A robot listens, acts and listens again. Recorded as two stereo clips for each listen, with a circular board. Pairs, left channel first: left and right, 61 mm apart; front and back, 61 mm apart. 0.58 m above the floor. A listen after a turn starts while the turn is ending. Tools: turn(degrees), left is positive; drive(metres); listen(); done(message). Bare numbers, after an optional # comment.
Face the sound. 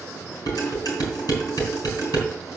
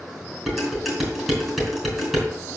# The dishes clattering: 90° left.
turn(90)
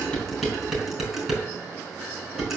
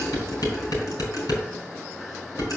# The dishes clattering is now 10° right.
turn(-10)
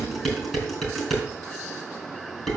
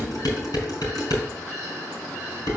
done("Facing the dishes clattering.")